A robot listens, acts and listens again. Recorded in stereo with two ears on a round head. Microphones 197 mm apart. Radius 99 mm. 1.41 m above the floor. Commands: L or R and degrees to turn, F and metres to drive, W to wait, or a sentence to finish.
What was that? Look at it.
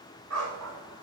R75
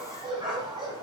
R20
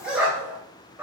R10
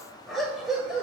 Facing the dog barking, 1 to 2 m away.